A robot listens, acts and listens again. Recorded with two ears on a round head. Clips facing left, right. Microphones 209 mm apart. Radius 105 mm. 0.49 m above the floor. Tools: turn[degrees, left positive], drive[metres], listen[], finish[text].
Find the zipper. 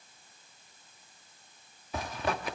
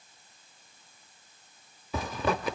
Thought: The zipper: about 70° right or 110° right.
Action: turn[-70]
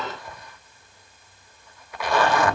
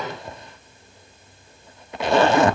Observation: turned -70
Thought: So it is at 25° right.
Action: turn[-25]
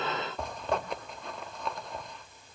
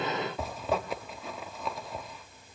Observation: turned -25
Action: finish[Found it: a zipper, straight ahead, under 1 m away.]